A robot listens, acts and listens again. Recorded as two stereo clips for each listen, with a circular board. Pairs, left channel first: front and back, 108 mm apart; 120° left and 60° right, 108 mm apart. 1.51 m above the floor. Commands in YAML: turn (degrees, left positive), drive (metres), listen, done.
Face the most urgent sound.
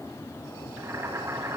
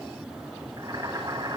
listen: true
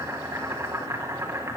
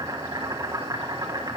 listen: true
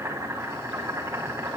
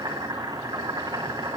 done: "I can't make out anything urgent to turn to."